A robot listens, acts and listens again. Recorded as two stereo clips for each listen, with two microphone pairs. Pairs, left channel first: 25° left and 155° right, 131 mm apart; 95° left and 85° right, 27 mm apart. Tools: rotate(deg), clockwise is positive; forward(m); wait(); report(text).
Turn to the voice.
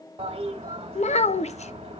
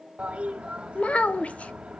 rotate(-55)
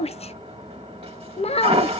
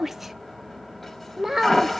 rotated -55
rotate(15)
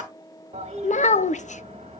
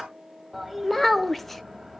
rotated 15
report("Facing the child speaking, under 1 m away.")